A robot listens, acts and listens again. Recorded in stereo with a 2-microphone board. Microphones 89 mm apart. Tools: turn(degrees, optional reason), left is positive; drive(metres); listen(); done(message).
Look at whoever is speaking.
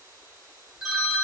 listen()
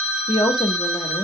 turn(degrees=55, reason="The woman speaking: about 55° left or 125° left.")
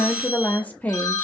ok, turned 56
turn(degrees=20, reason="So it is at 20° left.")
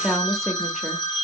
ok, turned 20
done("Found it: a woman speaking, straight ahead.")